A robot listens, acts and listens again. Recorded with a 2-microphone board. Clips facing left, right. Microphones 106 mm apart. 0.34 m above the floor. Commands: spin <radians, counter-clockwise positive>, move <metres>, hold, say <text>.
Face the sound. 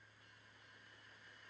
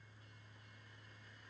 hold
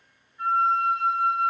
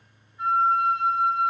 spin -0.26
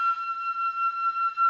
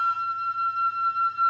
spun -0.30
spin -2.62
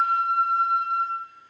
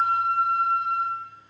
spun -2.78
spin 0.26
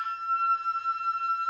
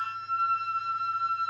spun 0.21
say Found it: a flute, straight ahead, 2 to 4 m away.